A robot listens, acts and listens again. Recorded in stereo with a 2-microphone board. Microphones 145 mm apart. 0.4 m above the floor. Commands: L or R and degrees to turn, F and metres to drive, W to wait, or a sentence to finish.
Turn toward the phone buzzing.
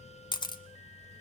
W
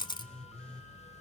L30
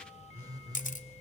R25
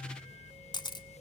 Facing the phone buzzing, 2 to 4 m away.